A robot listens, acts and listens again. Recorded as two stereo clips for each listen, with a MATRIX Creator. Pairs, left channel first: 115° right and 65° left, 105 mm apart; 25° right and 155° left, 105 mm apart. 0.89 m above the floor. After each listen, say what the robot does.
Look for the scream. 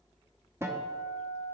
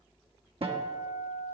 Keep listening.
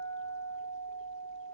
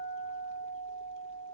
Keep listening.
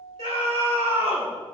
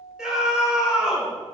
Turn 75° left.
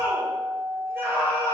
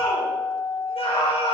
Found it: a scream, straight ahead.